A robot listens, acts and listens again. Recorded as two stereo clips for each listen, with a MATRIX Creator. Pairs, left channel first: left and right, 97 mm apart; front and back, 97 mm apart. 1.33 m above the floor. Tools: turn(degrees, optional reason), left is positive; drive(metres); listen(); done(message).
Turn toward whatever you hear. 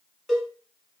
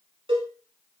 turn(degrees=180, reason="The cowbell: straight behind.")
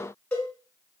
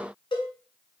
turn(degrees=20, reason="The cowbell is now 20° left.")
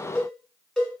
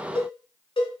done("Found it: a cowbell, straight ahead.")